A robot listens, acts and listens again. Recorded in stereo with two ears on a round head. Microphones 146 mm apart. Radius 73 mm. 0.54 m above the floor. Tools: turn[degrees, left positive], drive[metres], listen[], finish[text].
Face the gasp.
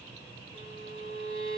Action: listen[]
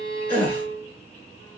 Action: turn[30]
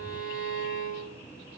Action: listen[]
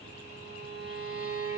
Action: finish[I heard a gasp, but can't make it out now. It was about 20° right or 140° left.]